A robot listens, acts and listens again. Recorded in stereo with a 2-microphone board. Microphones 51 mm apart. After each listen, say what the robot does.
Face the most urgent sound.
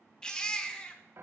Turn 20° left.
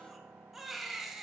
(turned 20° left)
Found it: a baby crying, straight ahead, under 1 m away.